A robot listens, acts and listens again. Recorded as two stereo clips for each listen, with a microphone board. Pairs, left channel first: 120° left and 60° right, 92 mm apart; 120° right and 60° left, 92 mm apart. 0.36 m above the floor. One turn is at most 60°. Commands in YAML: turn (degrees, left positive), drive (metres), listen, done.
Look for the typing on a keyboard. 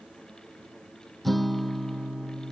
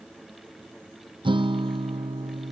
listen: true
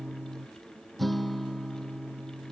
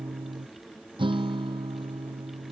listen: true
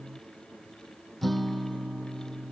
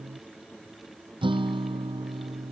done: "I can't make out typing on a keyboard, only a guitar."